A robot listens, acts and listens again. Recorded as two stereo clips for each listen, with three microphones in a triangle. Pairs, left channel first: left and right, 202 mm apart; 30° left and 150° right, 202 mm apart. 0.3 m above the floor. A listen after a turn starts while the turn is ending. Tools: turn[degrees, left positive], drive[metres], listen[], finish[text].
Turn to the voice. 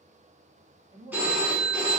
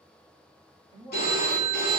Thought: The man speaking: 30° right.
Action: turn[-30]
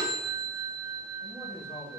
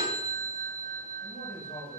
Thought: The man speaking is now 50° left.
Action: turn[50]
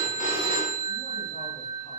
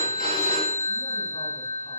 Action: listen[]
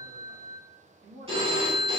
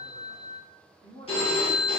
Thought: The man speaking is now 55° left.
Action: turn[55]
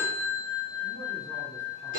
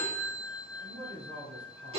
Action: listen[]
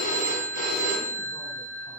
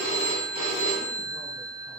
Action: listen[]
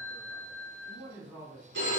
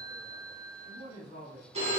Thought: The man speaking is now 10° right.
Action: turn[-10]
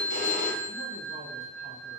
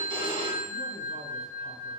Action: listen[]
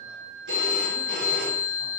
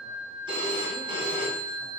Action: listen[]
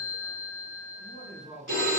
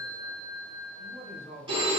Action: finish[Found it: a man speaking, straight ahead, 1 to 2 m away.]